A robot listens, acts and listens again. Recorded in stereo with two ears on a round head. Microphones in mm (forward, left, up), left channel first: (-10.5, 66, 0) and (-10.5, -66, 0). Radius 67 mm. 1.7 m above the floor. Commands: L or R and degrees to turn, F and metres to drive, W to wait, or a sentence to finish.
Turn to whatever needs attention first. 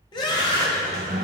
L30
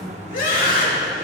L115
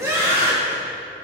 R20
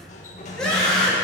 Found it: a scream, straight ahead.